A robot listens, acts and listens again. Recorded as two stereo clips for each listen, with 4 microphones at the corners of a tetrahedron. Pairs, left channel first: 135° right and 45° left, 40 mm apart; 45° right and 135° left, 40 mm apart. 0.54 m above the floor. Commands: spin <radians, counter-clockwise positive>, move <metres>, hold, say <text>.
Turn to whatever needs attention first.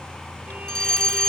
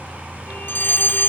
spin -1.13
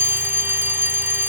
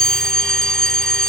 spin 0.52
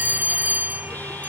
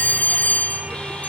say Facing the fire alarm.